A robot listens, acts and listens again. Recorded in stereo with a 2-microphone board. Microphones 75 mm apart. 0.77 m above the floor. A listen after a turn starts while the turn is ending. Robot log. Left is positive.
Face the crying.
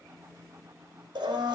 cmd idle
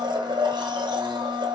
cmd idle
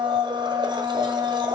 end: I can't make out crying, only a blender.